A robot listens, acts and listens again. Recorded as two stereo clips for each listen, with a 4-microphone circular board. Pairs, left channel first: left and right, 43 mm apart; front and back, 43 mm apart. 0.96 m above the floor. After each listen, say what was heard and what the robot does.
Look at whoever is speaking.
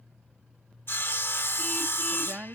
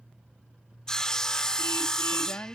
The woman speaking: 20° right. Turn 20° right.
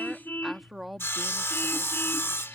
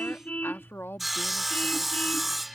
Facing the woman speaking.